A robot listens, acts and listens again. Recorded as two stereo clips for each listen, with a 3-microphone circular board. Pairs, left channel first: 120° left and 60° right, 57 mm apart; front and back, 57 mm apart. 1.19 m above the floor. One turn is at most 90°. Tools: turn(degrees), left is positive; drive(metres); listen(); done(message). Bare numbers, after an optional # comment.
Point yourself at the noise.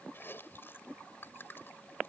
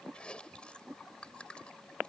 # The chewing: 70° left.
turn(70)
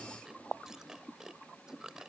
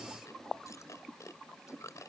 # The chewing is now 20° left.
turn(20)
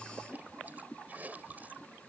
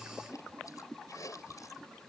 done("Facing the chewing.")